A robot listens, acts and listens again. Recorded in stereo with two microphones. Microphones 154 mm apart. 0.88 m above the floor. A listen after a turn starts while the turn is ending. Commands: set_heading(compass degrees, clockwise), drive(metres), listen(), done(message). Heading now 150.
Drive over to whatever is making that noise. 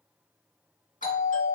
set_heading(95)
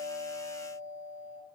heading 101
set_heading(51)
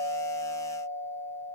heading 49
drive(1.0)
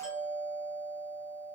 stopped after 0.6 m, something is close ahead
done("I am next to the doorbell.")